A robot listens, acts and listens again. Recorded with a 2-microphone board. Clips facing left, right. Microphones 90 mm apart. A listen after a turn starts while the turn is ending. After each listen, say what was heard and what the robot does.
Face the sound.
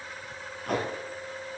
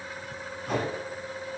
The tape being pulled: about 65° left or 115° left. Turn 65° left.
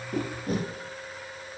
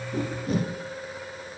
So it is at 45° left. Turn 45° left.
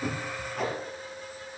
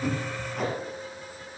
Facing the tape being pulled, 2 to 4 m away.